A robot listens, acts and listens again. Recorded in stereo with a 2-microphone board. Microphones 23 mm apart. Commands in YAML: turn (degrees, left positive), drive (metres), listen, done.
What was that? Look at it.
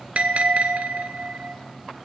turn: -90
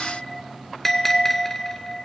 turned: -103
turn: 15
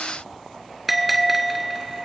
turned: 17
done: "Facing the bell, 1 to 2 m away."